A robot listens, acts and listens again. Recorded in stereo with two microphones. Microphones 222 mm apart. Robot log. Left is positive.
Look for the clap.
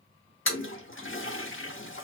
cmd idle
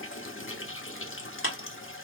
note: The clap: about 70° left or 110° left.
cmd yaw +70
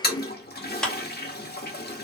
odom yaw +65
end: Facing the clap.